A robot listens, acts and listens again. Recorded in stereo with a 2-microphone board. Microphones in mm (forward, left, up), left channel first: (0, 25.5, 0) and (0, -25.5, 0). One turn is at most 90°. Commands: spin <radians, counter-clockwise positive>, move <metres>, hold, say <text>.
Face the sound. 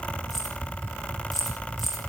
spin 0.52
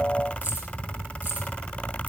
hold
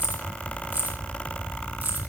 spin -0.61
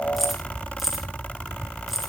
say Found it: keys jangling, straight ahead, 2 to 4 m away.